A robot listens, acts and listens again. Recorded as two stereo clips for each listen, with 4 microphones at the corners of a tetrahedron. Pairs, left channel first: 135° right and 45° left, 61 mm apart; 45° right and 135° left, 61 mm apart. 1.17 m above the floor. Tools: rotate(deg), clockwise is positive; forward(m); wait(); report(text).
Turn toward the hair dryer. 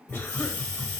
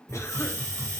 wait()
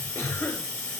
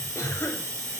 wait()
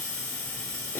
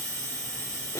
report("I can't make out a hair dryer, only a hiss and a cough.")